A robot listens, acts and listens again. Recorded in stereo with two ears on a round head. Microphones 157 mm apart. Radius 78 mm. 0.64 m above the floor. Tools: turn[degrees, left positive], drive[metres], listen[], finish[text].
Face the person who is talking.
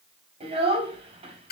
Thought: The child speaking: about 35° right or 145° right.
Action: turn[-35]
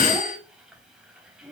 Action: finish[Found it: a child speaking, straight ahead, 2 to 4 m away.]